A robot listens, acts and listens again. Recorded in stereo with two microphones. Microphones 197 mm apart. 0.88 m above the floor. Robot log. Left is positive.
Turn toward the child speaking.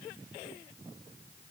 cmd idle
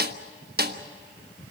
cmd idle
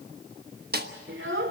note: The child speaking: about 75° right or 105° right.
cmd yaw -75
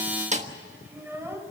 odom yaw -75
note: So it is at 10° right.
cmd yaw -10
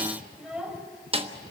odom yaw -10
end: Facing the child speaking, 2 to 4 m away.